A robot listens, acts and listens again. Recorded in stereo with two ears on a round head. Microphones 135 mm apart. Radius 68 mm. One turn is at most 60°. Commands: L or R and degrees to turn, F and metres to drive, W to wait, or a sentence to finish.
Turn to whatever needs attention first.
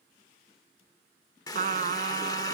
W
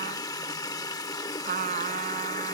W
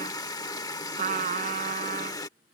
I can't make out anything urgent to turn to.